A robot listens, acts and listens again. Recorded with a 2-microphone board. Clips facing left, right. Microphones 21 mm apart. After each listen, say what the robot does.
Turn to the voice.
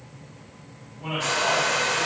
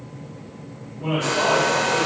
Turn 30° left.
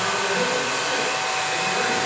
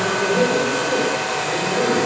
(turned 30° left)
Keep listening.
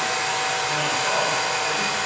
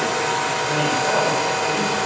Keep listening.
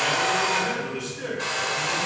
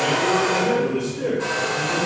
Turn 150° left.
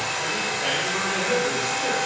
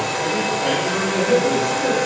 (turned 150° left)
Turn 15° left.
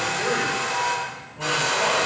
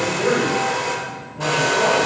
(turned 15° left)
Found it: a man speaking, straight ahead.